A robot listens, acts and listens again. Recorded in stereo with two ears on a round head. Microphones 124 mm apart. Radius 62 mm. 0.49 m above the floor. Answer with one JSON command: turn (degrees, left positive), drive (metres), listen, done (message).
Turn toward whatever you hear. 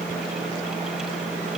{"listen": true}
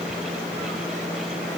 {"listen": true}
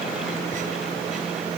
{"done": "I can't make out anything."}